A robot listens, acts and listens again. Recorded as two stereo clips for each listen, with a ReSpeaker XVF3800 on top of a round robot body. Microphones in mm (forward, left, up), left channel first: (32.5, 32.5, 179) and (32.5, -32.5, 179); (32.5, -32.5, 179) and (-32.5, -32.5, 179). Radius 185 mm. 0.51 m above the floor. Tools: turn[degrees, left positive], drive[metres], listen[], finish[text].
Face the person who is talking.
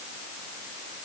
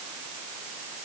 Action: listen[]
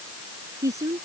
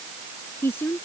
Thought: The woman speaking: 55° right.
Action: turn[-55]
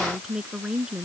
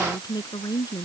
Thought: The woman speaking is now 15° right.
Action: turn[-15]
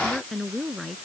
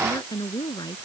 Action: finish[Found it: a woman speaking, straight ahead.]